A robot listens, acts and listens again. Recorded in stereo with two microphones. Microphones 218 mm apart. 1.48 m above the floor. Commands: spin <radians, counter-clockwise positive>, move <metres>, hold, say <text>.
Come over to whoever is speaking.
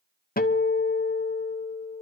hold
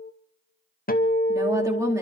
spin -0.52
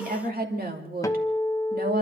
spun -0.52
spin -2.36
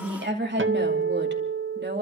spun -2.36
spin -0.96
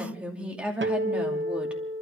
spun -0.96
move 1.0
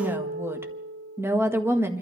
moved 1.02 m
spin -0.17
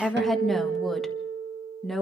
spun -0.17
move 1.0
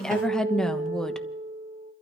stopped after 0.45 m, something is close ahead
say I am next to the woman speaking.